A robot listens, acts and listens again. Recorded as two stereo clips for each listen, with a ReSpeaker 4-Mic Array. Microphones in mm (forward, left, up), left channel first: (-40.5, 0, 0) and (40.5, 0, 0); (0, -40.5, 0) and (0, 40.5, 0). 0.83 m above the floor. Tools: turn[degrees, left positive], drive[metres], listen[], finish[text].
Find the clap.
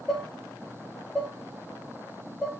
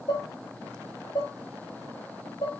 Action: listen[]
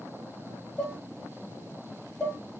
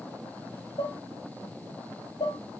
Action: listen[]
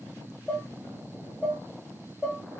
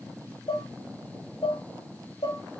Action: finish[I can't make out a clap, only dishes clattering.]